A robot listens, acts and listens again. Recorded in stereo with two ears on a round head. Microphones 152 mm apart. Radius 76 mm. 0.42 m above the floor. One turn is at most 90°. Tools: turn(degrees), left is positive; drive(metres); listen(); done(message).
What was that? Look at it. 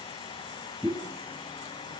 turn(degrees=-30)
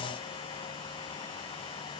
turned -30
listen()
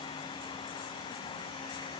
done("I heard a pop, but can't make it out now. It was about 25° left or 145° right.")